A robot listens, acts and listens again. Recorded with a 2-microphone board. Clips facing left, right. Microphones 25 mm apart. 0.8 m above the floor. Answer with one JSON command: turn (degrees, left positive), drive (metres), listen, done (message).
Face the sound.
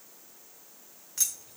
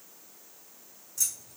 {"turn": 50}
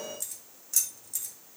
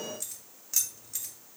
{"turn": -30}
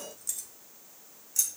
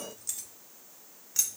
{"turn": -35}
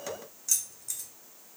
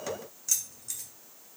{"turn": -15}
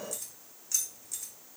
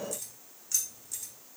{"done": "Found it: keys jangling, straight ahead, 2 to 4 m away."}